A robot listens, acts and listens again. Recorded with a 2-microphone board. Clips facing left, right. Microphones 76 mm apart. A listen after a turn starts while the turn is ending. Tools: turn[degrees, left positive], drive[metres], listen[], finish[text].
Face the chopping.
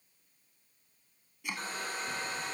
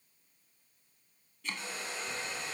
Action: turn[30]
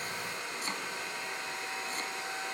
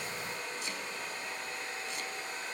Action: listen[]
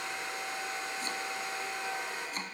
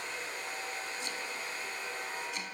Action: listen[]
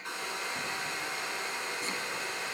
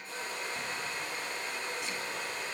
Action: finish[I heard chopping, but can't make it out now. It was about 15° right or 135° left.]